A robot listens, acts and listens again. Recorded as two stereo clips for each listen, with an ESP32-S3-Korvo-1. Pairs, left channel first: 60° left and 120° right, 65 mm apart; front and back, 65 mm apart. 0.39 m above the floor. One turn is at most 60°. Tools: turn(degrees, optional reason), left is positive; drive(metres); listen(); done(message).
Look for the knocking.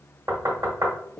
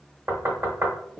turn(degrees=-60, reason="The knocking: 145° right.")
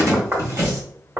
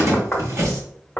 turn(degrees=-60, reason="The knocking is now 75° right.")
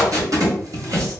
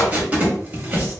turn(degrees=-15, reason="Nothing new. It was at 15° right.")
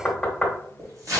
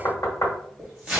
turn(degrees=-25, reason="The knocking is now 25° right.")
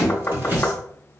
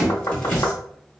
done("Facing the knocking, 1 to 2 m away.")